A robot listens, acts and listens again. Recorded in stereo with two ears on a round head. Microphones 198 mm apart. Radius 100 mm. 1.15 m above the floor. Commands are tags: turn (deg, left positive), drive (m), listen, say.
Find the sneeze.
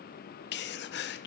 <turn deg="50"/>
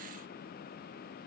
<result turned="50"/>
<listen/>
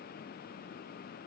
<say>I heard a sneeze, but can't make it out now. It was about straight ahead or 80° left.</say>